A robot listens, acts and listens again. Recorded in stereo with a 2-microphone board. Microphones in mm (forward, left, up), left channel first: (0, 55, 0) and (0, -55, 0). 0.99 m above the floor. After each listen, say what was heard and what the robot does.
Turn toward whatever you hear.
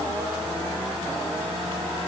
Keep listening.
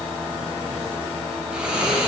Turn 30° right.
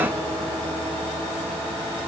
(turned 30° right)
Keep listening.
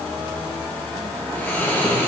So it is at 20° left. Turn 20° left.
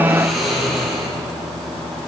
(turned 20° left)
Facing the snoring.